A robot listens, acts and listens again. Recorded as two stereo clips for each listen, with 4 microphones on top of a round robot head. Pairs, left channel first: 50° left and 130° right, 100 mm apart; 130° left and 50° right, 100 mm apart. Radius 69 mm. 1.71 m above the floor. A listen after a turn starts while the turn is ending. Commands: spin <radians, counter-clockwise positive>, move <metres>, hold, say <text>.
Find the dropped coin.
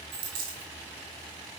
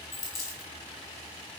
spin -2.97
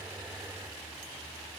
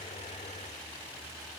say I heard a dropped coin from this way, but can't make it out now.